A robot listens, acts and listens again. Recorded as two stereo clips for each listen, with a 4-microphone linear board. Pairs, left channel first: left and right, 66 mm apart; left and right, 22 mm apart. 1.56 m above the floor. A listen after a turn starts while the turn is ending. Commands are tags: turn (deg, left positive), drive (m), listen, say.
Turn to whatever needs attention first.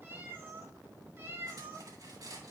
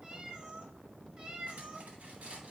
<listen/>
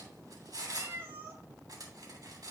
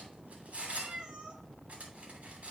<listen/>
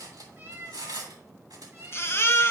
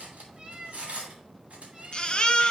<turn deg="40"/>
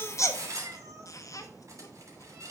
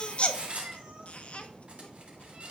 <listen/>
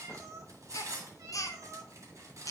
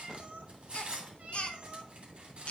<turn deg="90"/>
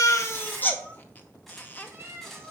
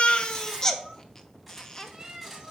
<turn deg="30"/>
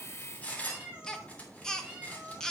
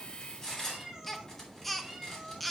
<turn deg="10"/>
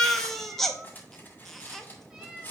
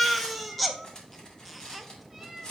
<say>Facing the baby crying.</say>